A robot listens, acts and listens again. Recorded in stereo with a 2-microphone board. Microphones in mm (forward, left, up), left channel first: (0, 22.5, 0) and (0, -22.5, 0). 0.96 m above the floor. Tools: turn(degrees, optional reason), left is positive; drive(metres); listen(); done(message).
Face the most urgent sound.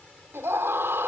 turn(degrees=-70, reason="The scream: about 70° right or 110° right.")
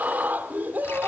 turn(degrees=-45, reason="So it is at 45° right.")
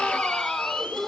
turn(degrees=10, reason="The scream is now 10° left.")
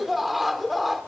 done("Facing the scream, 2 to 4 m away.")